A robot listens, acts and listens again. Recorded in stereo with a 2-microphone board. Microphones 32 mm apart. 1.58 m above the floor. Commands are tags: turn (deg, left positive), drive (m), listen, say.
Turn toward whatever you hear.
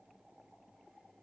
<listen/>
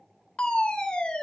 <turn deg="30"/>
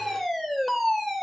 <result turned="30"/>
<say>Found it: a fire alarm, straight ahead.</say>